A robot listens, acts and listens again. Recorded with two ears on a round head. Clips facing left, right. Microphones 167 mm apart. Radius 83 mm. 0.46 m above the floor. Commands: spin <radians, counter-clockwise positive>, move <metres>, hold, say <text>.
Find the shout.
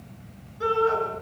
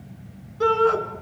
spin -1.13
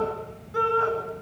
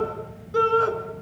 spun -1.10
spin -0.87
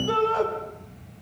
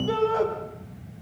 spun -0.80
say Found it: a shout, straight ahead.